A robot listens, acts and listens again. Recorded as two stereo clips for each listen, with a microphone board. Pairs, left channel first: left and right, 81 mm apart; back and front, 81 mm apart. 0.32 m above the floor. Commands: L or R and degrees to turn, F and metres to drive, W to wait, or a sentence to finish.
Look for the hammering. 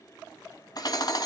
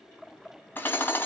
L120
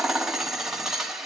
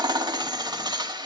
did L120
Found it: hammering, straight ahead.